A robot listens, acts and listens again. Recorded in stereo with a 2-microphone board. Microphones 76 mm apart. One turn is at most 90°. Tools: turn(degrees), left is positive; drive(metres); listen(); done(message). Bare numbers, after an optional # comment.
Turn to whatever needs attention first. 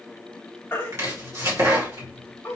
# The baby crying: about 25° left or 155° left.
turn(25)
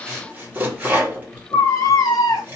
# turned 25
# So it is at 130° left.
turn(90)
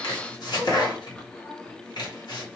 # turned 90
# Nothing new. It was at 40° left.
turn(40)
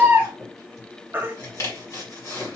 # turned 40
# The baby crying is now 20° right.
turn(-20)
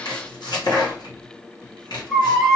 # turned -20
done("Found it: a baby crying, straight ahead, 1 to 2 m away.")